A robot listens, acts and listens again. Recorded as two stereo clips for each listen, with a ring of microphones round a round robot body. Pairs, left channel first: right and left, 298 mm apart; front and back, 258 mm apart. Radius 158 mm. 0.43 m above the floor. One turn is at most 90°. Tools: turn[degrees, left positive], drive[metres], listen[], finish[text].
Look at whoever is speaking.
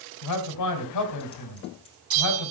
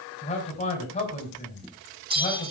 Thought: The man speaking: 70° right.
Action: turn[-70]
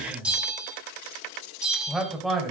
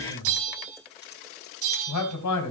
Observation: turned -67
Action: finish[Facing the man speaking, 2 to 4 m away.]